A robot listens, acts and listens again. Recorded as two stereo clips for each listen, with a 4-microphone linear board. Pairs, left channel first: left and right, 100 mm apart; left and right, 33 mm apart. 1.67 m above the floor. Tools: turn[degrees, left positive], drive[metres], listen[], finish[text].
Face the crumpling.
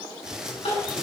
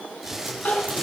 Action: turn[-30]
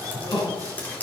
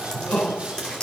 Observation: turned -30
Action: listen[]
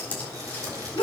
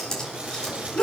Action: listen[]
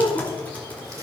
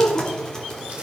Action: finish[I heard crumpling, but can't make it out now. It was about 25° left or 145° right.]